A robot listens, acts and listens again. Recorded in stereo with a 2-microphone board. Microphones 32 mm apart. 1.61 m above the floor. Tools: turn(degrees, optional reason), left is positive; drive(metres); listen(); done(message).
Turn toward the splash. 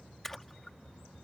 turn(degrees=30)
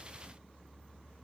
listen()
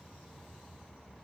done("I heard a splash, but can't make it out now. It was about 20° right or 140° left.")